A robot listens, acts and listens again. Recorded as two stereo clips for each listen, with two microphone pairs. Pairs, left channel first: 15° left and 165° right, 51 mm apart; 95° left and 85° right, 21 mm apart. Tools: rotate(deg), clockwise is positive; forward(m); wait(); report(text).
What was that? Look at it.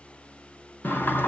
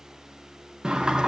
rotate(35)
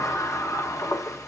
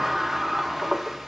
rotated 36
report("Found it: a sliding door, straight ahead, under 1 m away.")